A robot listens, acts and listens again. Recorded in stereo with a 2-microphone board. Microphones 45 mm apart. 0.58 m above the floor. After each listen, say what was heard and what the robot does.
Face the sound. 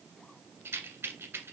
The rattle: about 75° right or 105° right. Turn 75° right.
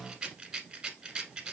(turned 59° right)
So it is at 25° right. Turn 25° right.
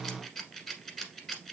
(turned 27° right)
Found it: a rattle, straight ahead.